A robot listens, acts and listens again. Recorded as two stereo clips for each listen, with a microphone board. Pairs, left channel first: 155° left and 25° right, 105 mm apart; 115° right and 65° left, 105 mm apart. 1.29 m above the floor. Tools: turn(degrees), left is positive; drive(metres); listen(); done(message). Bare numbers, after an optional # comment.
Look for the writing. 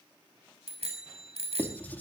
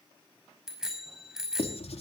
# The writing: 130° right.
turn(-130)
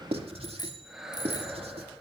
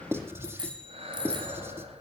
done("Found it: writing, straight ahead.")